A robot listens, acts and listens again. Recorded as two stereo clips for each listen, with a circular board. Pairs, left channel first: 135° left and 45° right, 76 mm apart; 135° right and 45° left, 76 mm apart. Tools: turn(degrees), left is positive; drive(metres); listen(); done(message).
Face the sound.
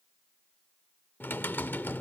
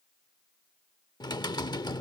turn(degrees=-160)
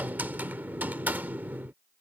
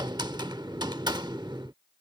turn(degrees=20)
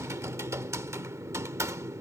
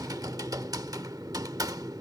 done("Facing the typing on a keyboard.")